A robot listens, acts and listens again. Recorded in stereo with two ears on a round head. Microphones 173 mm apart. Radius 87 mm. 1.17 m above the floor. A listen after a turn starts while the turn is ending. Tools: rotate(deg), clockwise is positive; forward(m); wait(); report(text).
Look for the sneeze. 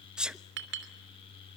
rotate(30)
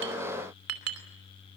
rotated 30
wait()
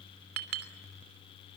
report("I heard a sneeze, but can't make it out now. It was about 25° left or 145° right.")